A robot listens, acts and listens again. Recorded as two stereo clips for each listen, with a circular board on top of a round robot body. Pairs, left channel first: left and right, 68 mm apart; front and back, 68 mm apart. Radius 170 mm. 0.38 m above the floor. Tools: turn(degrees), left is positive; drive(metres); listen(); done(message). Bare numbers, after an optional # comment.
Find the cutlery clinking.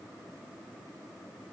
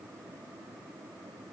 listen()
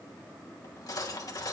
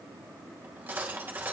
# The cutlery clinking: 120° left.
turn(120)
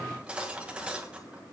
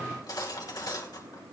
# The cutlery clinking is now 15° right.
turn(-15)
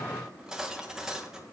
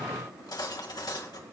# The cutlery clinking is now 10° right.
turn(-10)
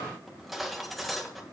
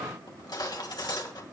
done("Facing the cutlery clinking.")